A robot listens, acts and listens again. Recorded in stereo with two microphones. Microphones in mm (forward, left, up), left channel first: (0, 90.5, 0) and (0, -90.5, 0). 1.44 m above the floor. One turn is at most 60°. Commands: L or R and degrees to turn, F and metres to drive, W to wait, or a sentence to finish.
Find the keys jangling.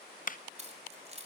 R35
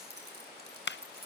R60
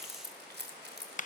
R60
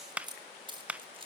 R30
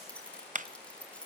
Found it: keys jangling, straight ahead, 2 to 4 m away.